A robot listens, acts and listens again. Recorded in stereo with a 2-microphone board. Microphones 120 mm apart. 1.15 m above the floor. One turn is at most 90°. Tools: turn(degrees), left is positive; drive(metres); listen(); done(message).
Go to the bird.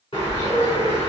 turn(degrees=50)
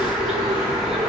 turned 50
drive(metres=1.0)
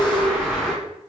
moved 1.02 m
drive(metres=1.0)
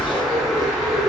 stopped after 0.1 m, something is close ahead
done("I am next to the bird.")